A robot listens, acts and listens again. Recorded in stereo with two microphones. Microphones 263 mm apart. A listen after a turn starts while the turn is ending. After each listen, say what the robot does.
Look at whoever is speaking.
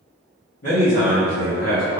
Turn 70° left.
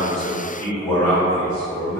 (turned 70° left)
Turn 10° left.
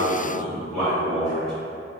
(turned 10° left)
Found it: a man speaking, straight ahead.